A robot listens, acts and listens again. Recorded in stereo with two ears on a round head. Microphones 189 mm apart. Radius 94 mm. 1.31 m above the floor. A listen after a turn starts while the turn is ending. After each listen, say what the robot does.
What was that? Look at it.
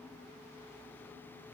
Keep listening.
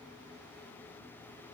Keep listening.
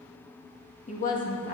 Turn 45° left.
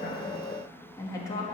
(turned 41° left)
Turn 20° left.
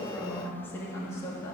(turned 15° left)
Turn 15° left.
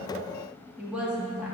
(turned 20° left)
Found it: a woman speaking, straight ahead, 2 to 4 m away.